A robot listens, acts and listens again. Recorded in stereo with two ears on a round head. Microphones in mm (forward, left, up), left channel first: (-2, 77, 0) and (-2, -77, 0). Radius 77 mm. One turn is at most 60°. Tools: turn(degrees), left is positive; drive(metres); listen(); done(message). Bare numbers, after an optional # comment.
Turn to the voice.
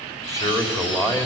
# The man speaking: about 20° left or 160° left.
turn(20)
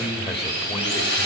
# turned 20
# So it is at 145° left.
turn(60)
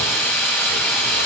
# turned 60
# Nothing new. It was at 85° left.
turn(60)
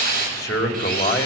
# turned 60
# The man speaking is now 20° left.
turn(20)
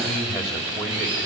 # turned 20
done("Found it: a man speaking, straight ahead.")